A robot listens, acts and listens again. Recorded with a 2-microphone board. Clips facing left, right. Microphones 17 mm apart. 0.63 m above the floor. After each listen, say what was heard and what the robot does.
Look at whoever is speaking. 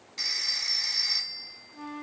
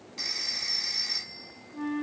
Keep listening.
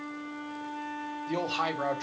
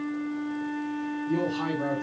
The man speaking: about 60° left or 120° left. Turn 60° left.
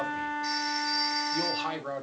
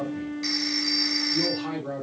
So it is at 40° left. Turn 40° left.
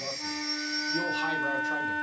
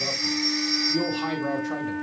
Keep listening.
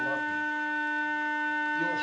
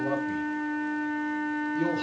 Keep listening.
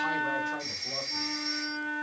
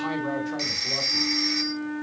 Facing where the man speaking came from. I can't hear it now.